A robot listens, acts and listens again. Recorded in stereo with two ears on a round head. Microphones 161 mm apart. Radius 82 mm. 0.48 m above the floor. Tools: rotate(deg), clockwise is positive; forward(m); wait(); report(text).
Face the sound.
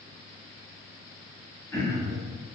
rotate(-30)
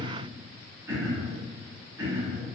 rotate(15)
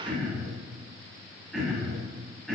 report("Found it: throat clearing, straight ahead, 2 to 4 m away.")